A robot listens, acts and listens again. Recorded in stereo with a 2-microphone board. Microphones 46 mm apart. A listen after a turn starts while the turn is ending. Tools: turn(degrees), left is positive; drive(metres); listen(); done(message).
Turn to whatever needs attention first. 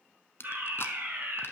turn(degrees=-55)
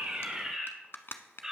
turn(degrees=-15)
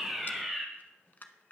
done("Facing the fire alarm, 2 to 4 m away.")